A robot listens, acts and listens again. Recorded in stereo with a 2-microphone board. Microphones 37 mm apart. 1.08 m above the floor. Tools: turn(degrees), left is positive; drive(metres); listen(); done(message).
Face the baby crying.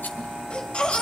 turn(degrees=25)
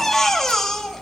done("Facing the baby crying, 2 to 4 m away.")